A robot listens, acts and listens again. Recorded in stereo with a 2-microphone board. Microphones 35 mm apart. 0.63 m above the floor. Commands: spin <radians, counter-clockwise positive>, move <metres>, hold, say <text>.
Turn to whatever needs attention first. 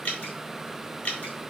hold
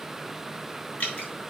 hold
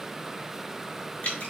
say I can't make out anything urgent, only dripping.